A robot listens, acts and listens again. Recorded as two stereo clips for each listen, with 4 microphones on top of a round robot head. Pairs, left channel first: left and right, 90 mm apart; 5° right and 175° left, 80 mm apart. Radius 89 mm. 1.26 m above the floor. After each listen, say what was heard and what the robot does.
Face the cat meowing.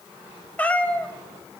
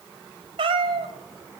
The cat meowing: 165° left. Turn 165° left.
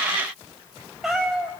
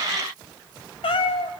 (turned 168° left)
Facing the cat meowing, 1 to 2 m away.